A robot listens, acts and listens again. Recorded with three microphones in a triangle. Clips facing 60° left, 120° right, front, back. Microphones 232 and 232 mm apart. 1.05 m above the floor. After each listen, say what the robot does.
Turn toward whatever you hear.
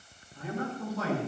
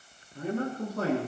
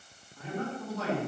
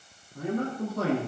Turn 150° right.
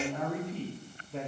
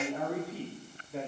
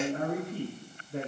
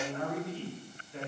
Turn 35° right.
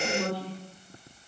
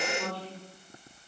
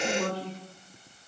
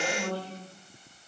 Turn 20° left.
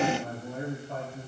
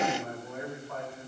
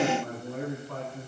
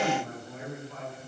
Found it: a man speaking, straight ahead.